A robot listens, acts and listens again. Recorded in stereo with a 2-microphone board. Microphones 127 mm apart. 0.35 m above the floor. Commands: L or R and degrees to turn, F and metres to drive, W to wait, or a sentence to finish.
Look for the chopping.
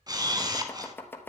L15
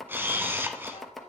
Facing the chopping.